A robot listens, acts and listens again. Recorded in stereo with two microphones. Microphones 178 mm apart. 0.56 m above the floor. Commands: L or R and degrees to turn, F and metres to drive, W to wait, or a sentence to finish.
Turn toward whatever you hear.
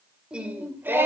R30
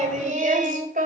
R125
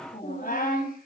L60
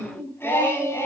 L15
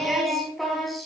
Found it: singing, straight ahead, over 4 m away.